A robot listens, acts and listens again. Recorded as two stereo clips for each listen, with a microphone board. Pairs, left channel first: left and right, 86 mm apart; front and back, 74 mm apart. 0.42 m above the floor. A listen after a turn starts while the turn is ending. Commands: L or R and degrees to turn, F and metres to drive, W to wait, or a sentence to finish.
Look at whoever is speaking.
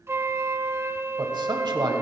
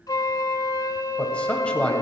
R75
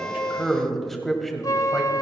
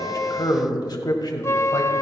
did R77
Facing the man speaking, 1 to 2 m away.